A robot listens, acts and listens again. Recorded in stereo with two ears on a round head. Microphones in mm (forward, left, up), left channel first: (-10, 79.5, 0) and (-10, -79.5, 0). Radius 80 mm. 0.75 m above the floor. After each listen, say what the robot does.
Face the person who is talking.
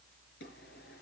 Keep listening.
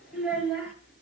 Turn 30° right.
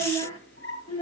Turn 25° left.
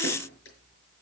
Keep listening.
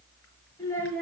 Turn 15° left.
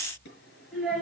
Facing the child speaking.